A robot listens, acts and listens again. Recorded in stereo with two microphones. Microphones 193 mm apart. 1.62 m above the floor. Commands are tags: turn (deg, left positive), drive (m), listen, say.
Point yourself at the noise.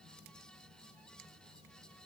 <listen/>
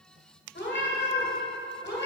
<turn deg="60"/>
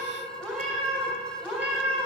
<say>Facing the cat meowing, 2 to 4 m away.</say>